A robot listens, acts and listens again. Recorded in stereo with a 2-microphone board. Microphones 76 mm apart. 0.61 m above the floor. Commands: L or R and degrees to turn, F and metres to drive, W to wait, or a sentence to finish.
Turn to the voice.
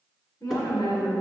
L40
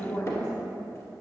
L95
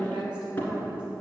R20
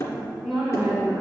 Facing the woman speaking.